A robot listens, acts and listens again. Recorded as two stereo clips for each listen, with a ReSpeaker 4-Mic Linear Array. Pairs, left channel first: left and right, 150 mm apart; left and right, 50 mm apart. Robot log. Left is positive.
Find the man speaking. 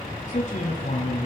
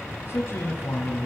note: The man speaking: about 55° left or 125° left.
cmd yaw +55
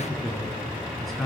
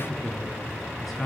end: Found it: a man speaking, straight ahead, 2 to 4 m away.